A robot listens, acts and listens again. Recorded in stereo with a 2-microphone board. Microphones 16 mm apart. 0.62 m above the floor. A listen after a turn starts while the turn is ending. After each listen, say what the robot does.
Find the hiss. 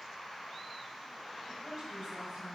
Keep listening.
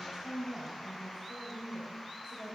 Keep listening.
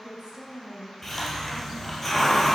Turn 30° left.
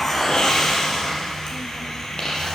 Turn 135° left.
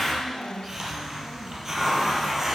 Turn 25° right.
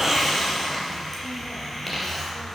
Facing the hiss.